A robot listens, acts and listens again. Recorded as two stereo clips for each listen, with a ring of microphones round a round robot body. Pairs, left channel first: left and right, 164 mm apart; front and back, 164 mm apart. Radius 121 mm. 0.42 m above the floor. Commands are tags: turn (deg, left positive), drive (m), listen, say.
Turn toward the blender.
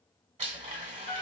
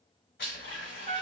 <turn deg="-40"/>
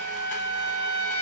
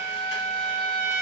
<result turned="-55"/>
<turn deg="15"/>
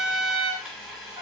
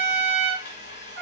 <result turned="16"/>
<say>Facing the blender, 1 to 2 m away.</say>